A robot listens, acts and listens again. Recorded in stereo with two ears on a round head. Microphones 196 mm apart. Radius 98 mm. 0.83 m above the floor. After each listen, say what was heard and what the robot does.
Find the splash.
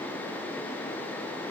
Keep listening.
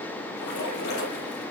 The splash: about 45° left or 135° left. Turn 45° left.
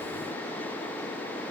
Keep listening.
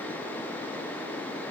I heard a splash, but can't make it out now. It was about straight ahead or 90° left.